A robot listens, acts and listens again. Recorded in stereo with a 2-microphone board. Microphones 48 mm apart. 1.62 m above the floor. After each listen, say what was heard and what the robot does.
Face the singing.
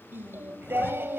The singing: about 55° right or 125° right. Turn 55° right.
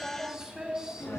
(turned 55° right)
So it is at 15° right. Turn 15° right.
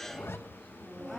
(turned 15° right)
Facing the singing.